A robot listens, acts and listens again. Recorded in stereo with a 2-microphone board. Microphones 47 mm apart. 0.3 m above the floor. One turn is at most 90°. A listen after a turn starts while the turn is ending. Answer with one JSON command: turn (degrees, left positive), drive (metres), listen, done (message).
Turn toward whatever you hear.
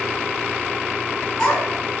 {"turn": 15}
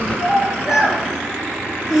{"turn": -30}
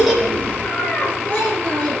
{"turn": 25}
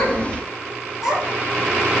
{"done": "Facing the child speaking."}